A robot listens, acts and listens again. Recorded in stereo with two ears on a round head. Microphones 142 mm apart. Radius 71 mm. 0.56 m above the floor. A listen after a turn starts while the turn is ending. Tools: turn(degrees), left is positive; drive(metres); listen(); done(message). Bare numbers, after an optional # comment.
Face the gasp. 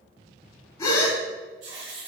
# The gasp: about 20° left or 160° left.
turn(20)
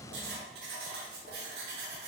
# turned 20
listen()
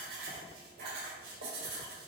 done("I heard a gasp, but can't make it out now. It was about straight ahead or 140° left.")